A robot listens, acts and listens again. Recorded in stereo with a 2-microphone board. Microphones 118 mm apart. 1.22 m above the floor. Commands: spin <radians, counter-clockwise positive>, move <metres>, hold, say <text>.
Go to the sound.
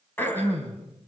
spin 0.26
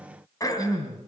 spin 2.62
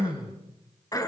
spin 0.52
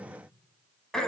move 1.0
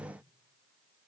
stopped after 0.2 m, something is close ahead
hold
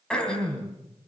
spin 0.17
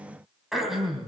say Blocked. The throat clearing is further on, straight ahead.